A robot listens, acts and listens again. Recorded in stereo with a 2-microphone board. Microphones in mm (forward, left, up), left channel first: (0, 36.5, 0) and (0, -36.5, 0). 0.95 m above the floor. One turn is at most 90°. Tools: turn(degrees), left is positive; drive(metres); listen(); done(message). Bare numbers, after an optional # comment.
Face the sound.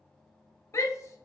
# The shout: about 45° left or 135° left.
turn(45)
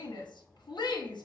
# So it is at 85° left.
turn(85)
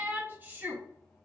# The shout is now 25° right.
turn(-25)
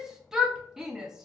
# The shout is now 10° right.
turn(-10)
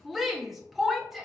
done("Found it: a shout, straight ahead.")